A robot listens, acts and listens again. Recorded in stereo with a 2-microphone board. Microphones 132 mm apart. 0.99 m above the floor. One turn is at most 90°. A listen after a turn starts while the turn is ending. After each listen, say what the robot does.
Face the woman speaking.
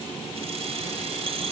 Keep listening.
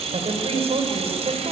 Turn 50° right.
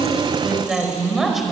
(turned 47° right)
Found it: a woman speaking, straight ahead.